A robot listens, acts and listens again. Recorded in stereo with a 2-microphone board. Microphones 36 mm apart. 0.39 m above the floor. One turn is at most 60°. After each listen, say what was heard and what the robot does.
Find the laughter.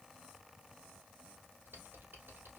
Keep listening.
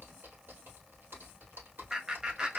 The laughter: about 20° right or 160° right. Turn 20° right.
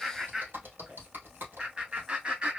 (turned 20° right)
The laughter: about 25° right or 155° right. Turn 25° right.
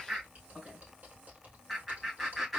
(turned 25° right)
Facing the laughter, 2 to 4 m away.